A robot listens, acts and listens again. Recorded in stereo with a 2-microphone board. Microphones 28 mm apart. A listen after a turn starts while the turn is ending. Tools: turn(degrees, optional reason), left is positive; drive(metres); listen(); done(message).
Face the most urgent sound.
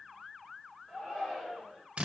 turn(degrees=25, reason="The shout: about 25° left or 155° left.")
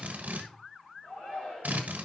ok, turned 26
turn(degrees=130, reason="So it is at 130° left.")
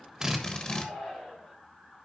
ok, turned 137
turn(degrees=-10, reason="The shout is now 10° right.")
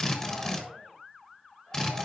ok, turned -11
listen()
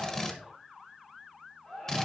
done("Found it: a shout, straight ahead, over 4 m away.")